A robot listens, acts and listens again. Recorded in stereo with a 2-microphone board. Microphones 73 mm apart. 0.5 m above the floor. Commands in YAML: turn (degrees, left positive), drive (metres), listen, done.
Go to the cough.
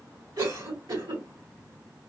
turn: -70
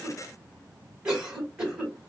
turn: -15
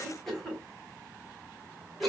drive: 1.0
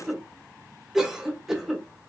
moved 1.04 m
drive: 1.0
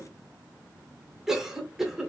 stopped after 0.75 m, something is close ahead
done: "Arrived at the cough, straight ahead."